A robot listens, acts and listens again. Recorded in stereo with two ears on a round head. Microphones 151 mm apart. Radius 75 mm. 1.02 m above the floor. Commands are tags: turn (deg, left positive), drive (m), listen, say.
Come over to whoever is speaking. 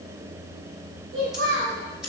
<turn deg="-70"/>
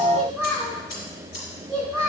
<drive m="1.0"/>
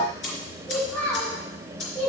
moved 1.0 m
<turn deg="10"/>
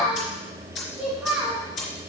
<drive m="1.0"/>
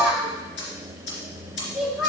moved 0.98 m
<drive m="1.0"/>
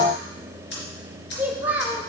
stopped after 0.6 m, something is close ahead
<turn deg="-10"/>
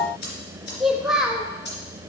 <say>I am next to the child speaking.</say>